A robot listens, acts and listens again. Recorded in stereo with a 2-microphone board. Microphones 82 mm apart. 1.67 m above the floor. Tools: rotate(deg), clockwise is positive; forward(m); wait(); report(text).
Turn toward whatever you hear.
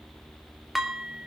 rotate(-30)
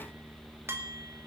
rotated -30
rotate(35)
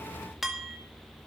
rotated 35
report("Found it: dishes clattering, straight ahead, 2 to 4 m away.")